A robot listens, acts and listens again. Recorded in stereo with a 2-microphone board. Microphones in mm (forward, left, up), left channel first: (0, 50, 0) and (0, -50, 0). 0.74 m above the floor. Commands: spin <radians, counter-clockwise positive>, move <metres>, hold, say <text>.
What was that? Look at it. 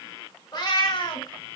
spin 0.87
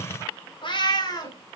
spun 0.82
spin 0.70
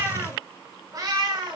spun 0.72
spin -0.79
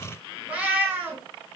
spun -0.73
spin -0.35
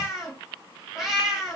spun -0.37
say Found it: a cat meowing, straight ahead, 2 to 4 m away.